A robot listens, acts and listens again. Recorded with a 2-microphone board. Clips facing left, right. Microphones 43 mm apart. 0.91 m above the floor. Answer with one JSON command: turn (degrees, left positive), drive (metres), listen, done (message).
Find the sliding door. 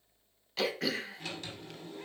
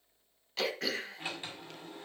{"turn": -20}
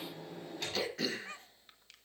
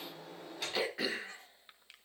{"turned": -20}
{"done": "Facing the sliding door."}